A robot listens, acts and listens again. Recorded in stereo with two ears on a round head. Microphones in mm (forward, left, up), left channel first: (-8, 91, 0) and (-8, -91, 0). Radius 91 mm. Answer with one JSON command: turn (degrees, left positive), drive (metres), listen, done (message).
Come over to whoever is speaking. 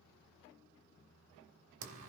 {"listen": true}
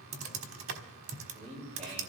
{"turn": -35}
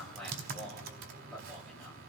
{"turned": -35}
{"drive": 1.0}
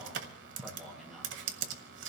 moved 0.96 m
{"drive": 1.0}
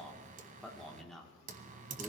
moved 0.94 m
{"drive": 1.0}
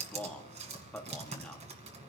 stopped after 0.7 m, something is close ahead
{"done": "Arrived at the man speaking, straight ahead."}